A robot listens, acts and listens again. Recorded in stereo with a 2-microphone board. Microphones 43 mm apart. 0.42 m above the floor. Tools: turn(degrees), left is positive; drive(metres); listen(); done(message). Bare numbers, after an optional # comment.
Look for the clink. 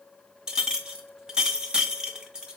# The clink: about 20° right or 160° right.
turn(-20)
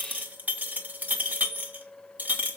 # So it is at 145° right.
turn(-145)
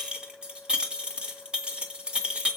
# The clink is now 20° right.
turn(-20)
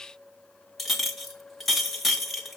done("Facing the clink.")